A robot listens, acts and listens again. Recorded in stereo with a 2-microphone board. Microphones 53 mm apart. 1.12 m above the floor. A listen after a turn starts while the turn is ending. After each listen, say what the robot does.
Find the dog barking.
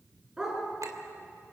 Turn 30° right.
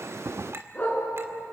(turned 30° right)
Turn 30° left.
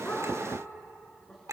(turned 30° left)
Keep listening.
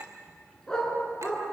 Turn 15° left.
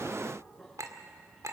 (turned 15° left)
Keep listening.
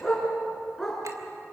Facing the dog barking.